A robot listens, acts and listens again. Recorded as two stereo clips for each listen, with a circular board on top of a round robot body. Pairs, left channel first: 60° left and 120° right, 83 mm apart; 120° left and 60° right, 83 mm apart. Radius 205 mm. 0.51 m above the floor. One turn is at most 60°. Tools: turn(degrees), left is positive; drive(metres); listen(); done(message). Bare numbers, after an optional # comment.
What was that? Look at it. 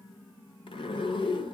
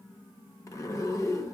# The zipper: 70° left.
turn(60)
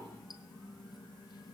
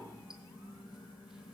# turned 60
# The zipper is now 20° left.
turn(20)
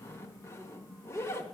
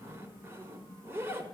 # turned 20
done("Found it: a zipper, straight ahead, 1 to 2 m away.")